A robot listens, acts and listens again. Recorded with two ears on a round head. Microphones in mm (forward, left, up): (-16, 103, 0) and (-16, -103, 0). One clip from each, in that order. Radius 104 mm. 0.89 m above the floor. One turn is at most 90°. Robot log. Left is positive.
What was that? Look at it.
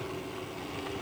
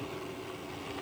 cmd idle
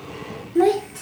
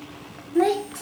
note: The child speaking: about 45° right or 135° right.
cmd yaw -45
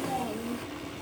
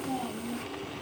note: So it is at 90° right.
cmd yaw -90
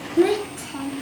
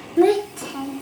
note: The child speaking is now 30° right.
cmd yaw -30
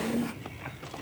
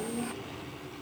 end: Facing the child speaking, 2 to 4 m away.